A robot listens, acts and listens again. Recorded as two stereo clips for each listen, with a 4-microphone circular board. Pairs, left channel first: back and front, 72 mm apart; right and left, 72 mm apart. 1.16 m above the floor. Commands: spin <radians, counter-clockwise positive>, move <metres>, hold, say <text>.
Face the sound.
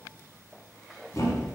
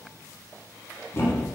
spin -2.36
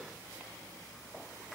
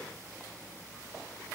say Facing where the thud came from. I can't hear it now.